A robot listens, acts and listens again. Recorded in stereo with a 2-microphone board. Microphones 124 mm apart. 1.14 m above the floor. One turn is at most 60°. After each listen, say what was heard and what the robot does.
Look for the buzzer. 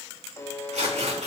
The buzzer: about 25° left or 155° left. Turn 25° left.
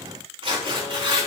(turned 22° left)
Keep listening.
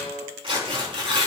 So it is at 135° left. Turn 60° left.
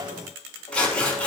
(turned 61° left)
Nothing new. It was at 70° left. Turn 60° left.
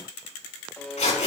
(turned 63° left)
The buzzer is now 10° left. Turn 10° left.
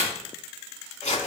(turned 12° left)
Keep listening.
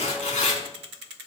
Keep listening.
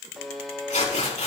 Facing the buzzer.